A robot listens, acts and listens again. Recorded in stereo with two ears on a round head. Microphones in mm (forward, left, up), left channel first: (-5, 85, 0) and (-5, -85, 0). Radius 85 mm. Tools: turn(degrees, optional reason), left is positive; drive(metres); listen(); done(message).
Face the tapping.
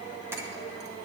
turn(degrees=-30)
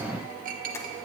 listen()
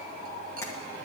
listen()
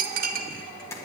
turn(degrees=15, reason="So it is at 15° left.")
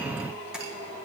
listen()
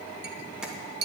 listen()
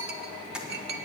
done("Facing the tapping.")